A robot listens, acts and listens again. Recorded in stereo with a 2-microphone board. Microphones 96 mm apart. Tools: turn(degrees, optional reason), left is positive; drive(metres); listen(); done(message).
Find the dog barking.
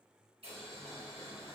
listen()
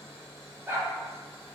turn(degrees=-25, reason="The dog barking: about 25° right or 155° right.")
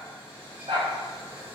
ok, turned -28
turn(degrees=-115, reason="So it is at 115° right.")
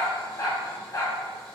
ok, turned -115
turn(degrees=45, reason="The dog barking is now 45° left.")
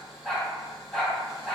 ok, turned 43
done("Facing the dog barking.")